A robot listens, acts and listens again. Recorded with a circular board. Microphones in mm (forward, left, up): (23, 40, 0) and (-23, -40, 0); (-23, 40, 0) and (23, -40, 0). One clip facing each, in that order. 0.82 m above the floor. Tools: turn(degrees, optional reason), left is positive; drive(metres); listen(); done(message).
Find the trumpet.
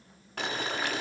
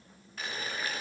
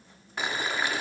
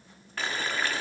listen()
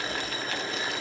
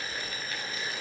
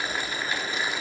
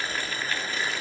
listen()
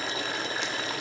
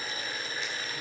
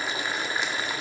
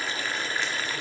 done("I can't make out a trumpet, only boiling.")